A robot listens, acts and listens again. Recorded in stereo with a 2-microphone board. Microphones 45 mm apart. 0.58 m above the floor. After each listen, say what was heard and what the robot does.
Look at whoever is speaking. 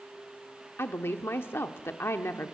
The woman speaking: about 60° left or 120° left. Turn 60° left.
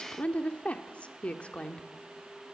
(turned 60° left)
So it is at 30° left. Turn 30° left.
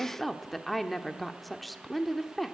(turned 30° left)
Found it: a woman speaking, straight ahead, 1 to 2 m away.